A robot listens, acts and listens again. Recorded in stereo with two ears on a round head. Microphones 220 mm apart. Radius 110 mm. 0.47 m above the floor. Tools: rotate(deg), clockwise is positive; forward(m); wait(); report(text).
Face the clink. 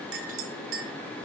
rotate(60)
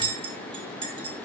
rotate(25)
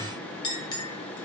rotate(-25)
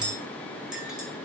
report("Found it: a clink, straight ahead, 1 to 2 m away.")